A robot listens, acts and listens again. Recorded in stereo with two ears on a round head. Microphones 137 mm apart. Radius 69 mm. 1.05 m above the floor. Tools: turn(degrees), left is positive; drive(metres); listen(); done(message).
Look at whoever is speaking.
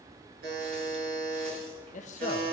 turn(degrees=50)
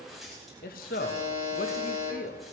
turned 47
turn(degrees=75)
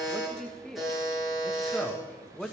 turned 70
done("Found it: a man speaking, straight ahead.")